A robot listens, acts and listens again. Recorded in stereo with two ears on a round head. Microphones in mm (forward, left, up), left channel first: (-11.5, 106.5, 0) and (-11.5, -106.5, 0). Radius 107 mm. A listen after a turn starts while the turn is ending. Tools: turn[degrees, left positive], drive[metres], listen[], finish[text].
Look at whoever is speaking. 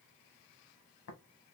Action: listen[]
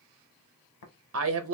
Thought: The woman speaking: about 60° right or 120° right.
Action: turn[-60]
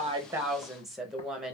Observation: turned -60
Action: finish[Facing the woman speaking, under 1 m away.]